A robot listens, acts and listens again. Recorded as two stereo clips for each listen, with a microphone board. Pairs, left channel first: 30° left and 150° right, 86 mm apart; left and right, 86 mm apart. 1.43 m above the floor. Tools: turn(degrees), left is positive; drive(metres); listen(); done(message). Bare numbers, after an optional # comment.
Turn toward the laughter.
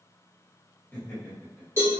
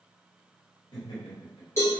# The laughter: 100° left.
turn(100)
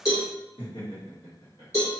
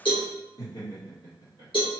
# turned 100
# The laughter is now 65° left.
turn(65)
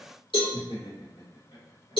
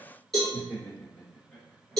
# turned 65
# The laughter is now 15° left.
turn(15)
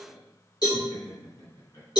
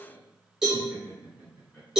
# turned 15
# The laughter is now 10° left.
turn(10)
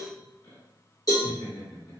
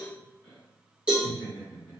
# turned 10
done("Found it: laughter, straight ahead, 1 to 2 m away.")